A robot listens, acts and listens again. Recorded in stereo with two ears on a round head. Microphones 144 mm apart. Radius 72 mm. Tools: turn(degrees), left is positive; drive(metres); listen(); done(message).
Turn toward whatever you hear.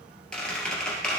turn(degrees=30)
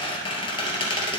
turn(degrees=140)
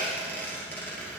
turn(degrees=10)
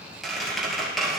done("Found it: a squeak, straight ahead.")